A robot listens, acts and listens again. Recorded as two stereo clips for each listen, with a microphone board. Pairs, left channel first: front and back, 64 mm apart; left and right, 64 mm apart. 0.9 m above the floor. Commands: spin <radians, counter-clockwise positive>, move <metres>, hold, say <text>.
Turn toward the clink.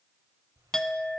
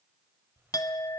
spin 1.40
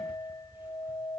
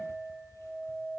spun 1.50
spin -0.17
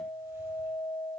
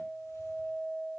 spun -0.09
say Found it: a clink, straight ahead, 1 to 2 m away.